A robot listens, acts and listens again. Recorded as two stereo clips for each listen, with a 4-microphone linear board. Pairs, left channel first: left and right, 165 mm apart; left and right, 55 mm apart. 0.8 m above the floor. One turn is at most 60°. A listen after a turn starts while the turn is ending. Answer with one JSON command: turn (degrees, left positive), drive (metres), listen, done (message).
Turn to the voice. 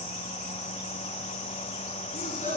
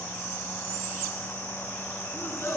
{"turn": 50}
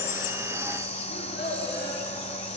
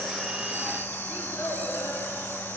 {"turn": 60}
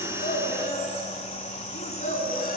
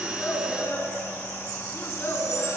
{"turn": 45}
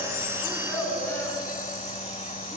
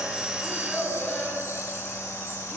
{"turn": 10}
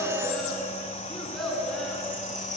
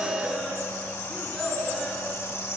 {"done": "Found it: a child speaking, straight ahead, over 4 m away."}